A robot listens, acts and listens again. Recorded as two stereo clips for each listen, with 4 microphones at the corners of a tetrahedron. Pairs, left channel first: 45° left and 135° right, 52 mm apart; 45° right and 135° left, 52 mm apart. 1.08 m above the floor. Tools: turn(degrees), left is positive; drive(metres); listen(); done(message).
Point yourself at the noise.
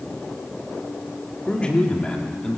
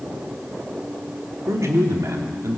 turn(degrees=120)
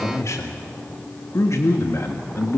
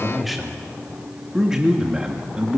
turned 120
turn(degrees=65)
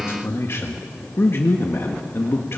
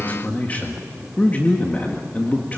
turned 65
turn(degrees=10)
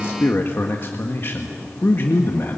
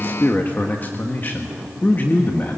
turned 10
done("Found it: a man speaking, straight ahead, 1 to 2 m away.")